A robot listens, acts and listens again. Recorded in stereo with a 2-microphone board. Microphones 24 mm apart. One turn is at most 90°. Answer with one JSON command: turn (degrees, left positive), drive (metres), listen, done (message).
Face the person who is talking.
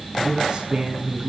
{"turn": -35}
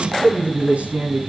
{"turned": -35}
{"turn": -90}
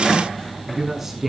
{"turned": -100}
{"turn": -10}
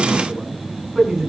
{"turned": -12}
{"done": "Found it: a man speaking, straight ahead."}